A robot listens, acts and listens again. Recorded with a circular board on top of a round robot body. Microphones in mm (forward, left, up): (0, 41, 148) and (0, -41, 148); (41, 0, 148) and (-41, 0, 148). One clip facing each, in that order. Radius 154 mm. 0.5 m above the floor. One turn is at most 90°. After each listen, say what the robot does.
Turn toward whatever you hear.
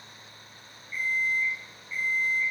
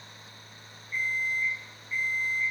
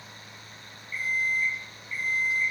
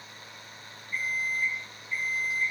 Turn 90° right.
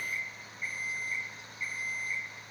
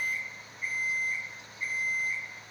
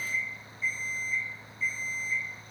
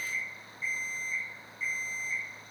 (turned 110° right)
Turn 35° right.
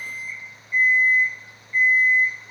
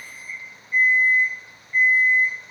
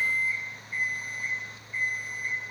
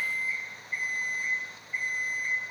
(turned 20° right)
Turn 15° right.
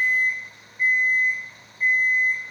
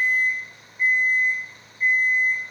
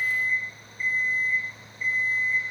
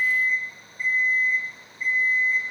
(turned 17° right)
Facing the alarm clock.